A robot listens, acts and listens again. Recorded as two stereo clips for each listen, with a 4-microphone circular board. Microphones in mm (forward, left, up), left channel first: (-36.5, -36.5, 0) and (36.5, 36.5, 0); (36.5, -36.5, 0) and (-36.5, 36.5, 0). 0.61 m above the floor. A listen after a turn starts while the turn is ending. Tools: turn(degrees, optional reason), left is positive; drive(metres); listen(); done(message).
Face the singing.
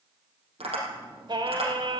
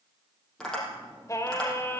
turn(degrees=20, reason="The singing: 20° left.")
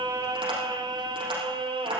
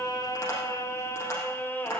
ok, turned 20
turn(degrees=25, reason="The singing is now 25° left.")
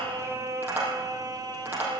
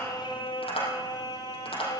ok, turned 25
done("Facing the singing.")